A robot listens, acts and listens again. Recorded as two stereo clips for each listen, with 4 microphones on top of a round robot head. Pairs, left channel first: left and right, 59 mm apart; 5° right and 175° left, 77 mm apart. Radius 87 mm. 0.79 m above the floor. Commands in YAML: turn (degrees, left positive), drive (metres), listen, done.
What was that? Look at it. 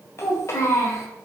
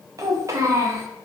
turn: 125
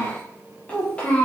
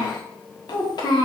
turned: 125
turn: 15
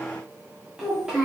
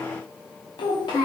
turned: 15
turn: -10
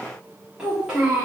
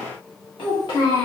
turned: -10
turn: -20
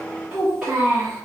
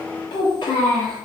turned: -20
turn: -10
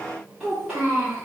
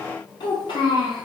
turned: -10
done: "Facing the child speaking, 1 to 2 m away."